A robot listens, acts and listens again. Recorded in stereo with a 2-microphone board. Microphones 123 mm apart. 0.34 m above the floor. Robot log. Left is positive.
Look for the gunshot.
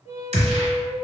note: The gunshot: about 75° right or 105° right.
cmd yaw -75
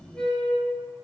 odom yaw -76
cmd idle
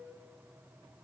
end: I heard a gunshot, but can't make it out now. It was about straight ahead or 30° right.